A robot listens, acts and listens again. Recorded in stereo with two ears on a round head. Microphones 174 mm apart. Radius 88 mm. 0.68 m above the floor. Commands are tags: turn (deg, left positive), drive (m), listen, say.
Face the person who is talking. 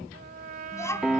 <turn deg="15"/>
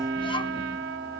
<listen/>
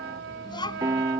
<turn deg="25"/>
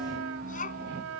<turn deg="135"/>
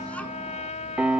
<listen/>
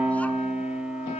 <listen/>
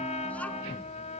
<say>Facing where the child speaking came from. I can't hear it now.</say>